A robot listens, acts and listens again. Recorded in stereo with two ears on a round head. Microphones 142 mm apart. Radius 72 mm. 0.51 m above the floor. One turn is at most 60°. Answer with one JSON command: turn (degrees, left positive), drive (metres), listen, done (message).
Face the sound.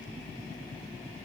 {"listen": true}
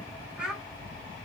{"turn": -30}
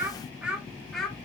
{"turn": 30}
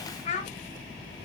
{"turn": 60}
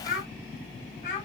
{"turn": 45}
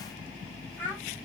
{"turn": 10}
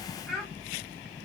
{"done": "Facing the child speaking."}